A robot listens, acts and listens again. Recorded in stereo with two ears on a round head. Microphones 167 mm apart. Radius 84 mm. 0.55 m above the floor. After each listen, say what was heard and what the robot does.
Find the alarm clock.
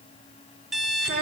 Turn 30° right.
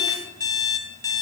So it is at 25° left. Turn 25° left.
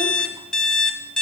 Facing the alarm clock, under 1 m away.